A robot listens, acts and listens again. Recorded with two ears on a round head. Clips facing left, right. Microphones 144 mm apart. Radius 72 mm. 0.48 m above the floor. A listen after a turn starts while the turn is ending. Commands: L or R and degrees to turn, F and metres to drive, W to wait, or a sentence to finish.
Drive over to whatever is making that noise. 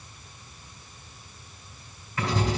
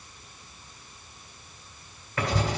R50
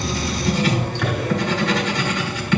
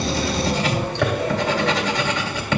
R80
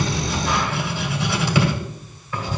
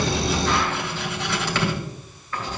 L10
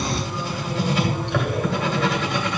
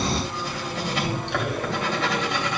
F1.0
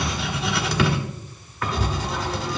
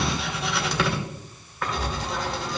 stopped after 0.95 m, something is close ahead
Arrived at the writing, straight ahead.